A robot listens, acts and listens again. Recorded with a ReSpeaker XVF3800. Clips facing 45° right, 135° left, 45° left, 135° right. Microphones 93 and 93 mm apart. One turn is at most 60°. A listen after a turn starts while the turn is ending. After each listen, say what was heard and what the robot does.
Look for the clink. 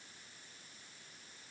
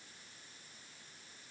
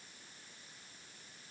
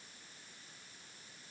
Keep listening.
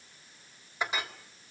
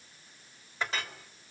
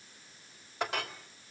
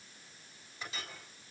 The clink: 30° left. Turn 30° left.
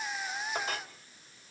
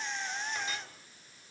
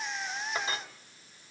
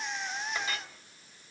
The clink is now 10° right. Turn 10° right.
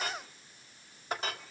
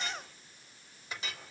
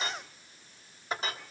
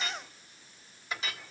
Found it: a clink, straight ahead, 2 to 4 m away.